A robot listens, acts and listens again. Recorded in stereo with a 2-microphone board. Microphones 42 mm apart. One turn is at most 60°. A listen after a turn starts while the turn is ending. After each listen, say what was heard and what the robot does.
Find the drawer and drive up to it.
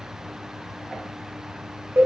Keep listening.
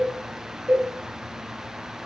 Keep listening.
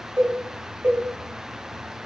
I can't make out a drawer, only a cowbell.